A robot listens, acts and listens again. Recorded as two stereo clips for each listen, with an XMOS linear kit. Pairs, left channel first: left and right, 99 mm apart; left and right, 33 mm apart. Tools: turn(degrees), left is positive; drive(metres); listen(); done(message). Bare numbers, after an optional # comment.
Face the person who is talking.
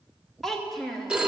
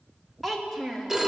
turn(30)
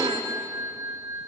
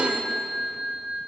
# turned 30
listen()
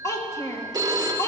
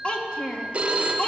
# So it is at 150° left.
turn(150)
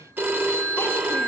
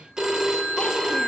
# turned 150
listen()
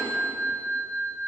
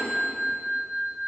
listen()
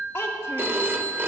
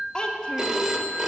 # The child speaking is now 25° left.
turn(25)
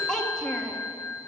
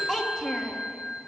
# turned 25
done("Found it: a child speaking, straight ahead, 1 to 2 m away.")